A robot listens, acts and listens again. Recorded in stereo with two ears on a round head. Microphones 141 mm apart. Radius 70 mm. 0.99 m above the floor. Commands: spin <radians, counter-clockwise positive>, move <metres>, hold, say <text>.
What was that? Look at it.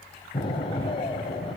spin 0.61
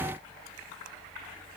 hold
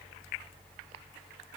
say I heard an explosion, but can't make it out now. It was about straight ahead or 110° left.